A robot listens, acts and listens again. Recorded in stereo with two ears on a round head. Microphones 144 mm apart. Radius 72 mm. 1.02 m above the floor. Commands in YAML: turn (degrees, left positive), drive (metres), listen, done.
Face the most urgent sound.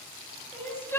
turn: 30
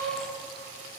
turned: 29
listen: true
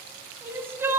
turn: -15
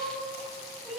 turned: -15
done: "Facing the crying."